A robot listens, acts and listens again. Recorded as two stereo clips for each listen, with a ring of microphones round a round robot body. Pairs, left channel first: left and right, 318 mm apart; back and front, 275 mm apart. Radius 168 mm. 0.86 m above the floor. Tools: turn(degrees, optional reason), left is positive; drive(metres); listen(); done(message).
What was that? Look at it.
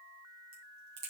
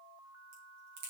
turn(degrees=-40, reason="The crack: 40° right.")
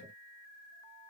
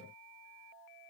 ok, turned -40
done("Facing where the crack came from. I can't hear it now.")